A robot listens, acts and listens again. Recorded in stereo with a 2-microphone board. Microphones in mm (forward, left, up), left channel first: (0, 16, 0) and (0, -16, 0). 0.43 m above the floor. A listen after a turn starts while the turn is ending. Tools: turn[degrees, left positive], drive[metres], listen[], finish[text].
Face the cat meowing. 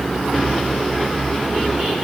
Action: listen[]
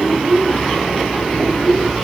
Action: listen[]
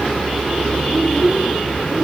Action: finish[I can't make out a cat meowing, only a child speaking.]